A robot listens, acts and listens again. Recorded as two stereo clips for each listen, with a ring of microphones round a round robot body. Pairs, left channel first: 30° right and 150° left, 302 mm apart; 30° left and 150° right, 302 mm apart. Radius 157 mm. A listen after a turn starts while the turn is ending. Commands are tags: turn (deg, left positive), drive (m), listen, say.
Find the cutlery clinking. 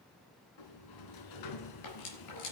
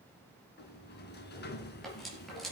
<turn deg="-60"/>
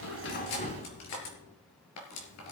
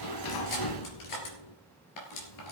<say>Facing the cutlery clinking, 2 to 4 m away.</say>